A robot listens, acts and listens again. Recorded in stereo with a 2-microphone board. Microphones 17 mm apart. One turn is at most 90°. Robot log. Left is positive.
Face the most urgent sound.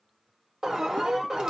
note: The alarm: about 40° right or 140° right.
cmd yaw -40
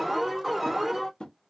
end: Facing the alarm.